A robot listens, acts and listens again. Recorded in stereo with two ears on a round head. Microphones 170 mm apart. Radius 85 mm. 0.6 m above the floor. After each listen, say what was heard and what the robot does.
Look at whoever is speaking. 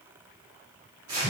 Keep listening.
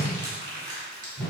Keep listening.
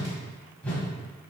I can't make out anyone speaking, only a whoosh and crumpling.